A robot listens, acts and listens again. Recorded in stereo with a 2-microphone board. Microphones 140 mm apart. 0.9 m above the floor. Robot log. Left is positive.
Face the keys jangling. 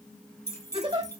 note: The keys jangling: about 20° left or 160° left.
cmd yaw +20
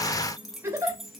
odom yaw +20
end: Facing the keys jangling.